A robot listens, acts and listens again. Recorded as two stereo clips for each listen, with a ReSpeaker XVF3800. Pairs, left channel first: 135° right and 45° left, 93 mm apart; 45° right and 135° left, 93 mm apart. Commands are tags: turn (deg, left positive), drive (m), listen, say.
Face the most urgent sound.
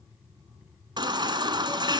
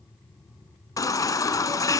<say>Found it: a baby crying, straight ahead.</say>